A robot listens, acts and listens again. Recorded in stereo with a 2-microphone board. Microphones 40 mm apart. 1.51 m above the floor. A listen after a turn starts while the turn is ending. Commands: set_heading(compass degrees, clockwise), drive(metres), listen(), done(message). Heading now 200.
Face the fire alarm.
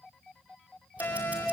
set_heading(110)
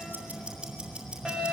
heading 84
set_heading(99)
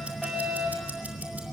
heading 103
done("Found it: a fire alarm, straight ahead.")